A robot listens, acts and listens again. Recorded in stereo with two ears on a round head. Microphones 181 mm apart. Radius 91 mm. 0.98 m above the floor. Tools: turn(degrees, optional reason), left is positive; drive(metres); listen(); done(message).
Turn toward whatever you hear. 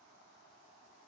listen()
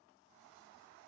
listen()
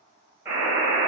turn(degrees=-30)
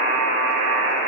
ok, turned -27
turn(degrees=20, reason="So it is at 20° left.")
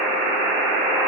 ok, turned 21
done("Facing the buzzer, 1 to 2 m away.")